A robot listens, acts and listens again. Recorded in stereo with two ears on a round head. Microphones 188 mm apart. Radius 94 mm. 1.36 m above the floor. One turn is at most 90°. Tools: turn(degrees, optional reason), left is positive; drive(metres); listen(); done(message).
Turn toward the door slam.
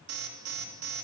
listen()
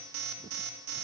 listen()
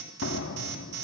turn(degrees=60, reason="The door slam: about 60° left or 120° left.")
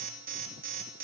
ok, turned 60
listen()
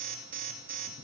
done("I heard a door slam, but can't make it out now. It was about straight ahead or 60° left.")